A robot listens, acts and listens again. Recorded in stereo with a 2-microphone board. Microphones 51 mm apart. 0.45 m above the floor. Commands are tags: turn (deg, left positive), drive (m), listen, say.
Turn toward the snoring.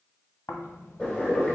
<turn deg="90"/>
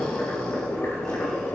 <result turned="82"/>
<turn deg="10"/>
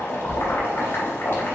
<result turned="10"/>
<say>Facing the snoring.</say>